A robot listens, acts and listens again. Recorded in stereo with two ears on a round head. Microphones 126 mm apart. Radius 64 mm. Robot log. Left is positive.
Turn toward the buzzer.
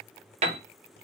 cmd idle
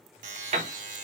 note: The buzzer: about 60° right or 120° right.
cmd yaw -60
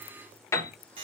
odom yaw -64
note: So it is at 40° right.
cmd yaw -40
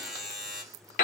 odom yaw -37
end: Found it: a buzzer, straight ahead.